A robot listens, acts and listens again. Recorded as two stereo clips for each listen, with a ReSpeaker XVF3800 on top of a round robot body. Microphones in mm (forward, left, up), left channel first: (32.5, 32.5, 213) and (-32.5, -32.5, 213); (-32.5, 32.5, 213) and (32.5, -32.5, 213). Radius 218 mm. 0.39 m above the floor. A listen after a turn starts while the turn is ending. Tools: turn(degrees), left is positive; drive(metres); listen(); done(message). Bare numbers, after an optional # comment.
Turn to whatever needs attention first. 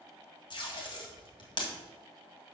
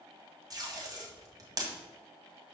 listen()
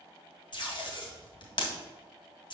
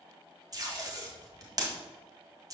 listen()
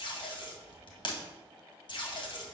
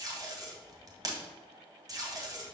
done("I can't make out anything urgent, only tape being pulled.")